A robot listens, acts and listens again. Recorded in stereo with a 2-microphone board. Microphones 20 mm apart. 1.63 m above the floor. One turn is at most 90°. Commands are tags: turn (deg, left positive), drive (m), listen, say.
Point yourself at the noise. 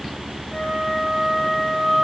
<turn deg="25"/>
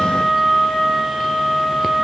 <turn deg="90"/>
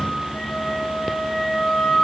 <turn deg="75"/>
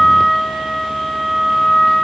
<turn deg="25"/>
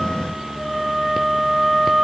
<turn deg="10"/>
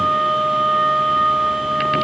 <say>Facing the flute, 2 to 4 m away.</say>